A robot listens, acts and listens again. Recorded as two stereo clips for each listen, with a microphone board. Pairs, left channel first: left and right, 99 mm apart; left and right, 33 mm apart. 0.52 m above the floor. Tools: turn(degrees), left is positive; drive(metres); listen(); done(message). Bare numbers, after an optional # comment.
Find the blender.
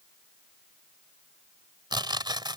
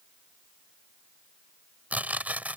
listen()
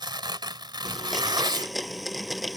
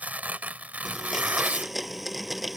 turn(30)
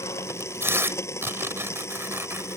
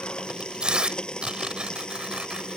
# So it is at 150° left.
turn(150)
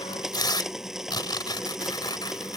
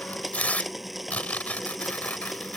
done("Found it: a blender, straight ahead.")